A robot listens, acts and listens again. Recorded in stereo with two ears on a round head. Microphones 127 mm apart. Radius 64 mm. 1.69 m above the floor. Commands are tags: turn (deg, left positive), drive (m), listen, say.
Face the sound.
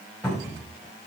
<turn deg="-30"/>
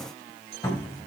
<turn deg="25"/>
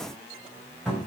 <say>Found it: a cupboard door, straight ahead.</say>